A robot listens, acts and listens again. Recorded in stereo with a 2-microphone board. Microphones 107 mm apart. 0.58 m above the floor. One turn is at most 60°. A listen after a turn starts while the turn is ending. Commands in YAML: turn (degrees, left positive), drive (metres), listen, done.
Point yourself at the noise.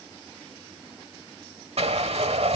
turn: -60
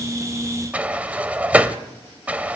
turn: -15
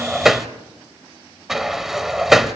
done: "Facing the sliding door, 1 to 2 m away."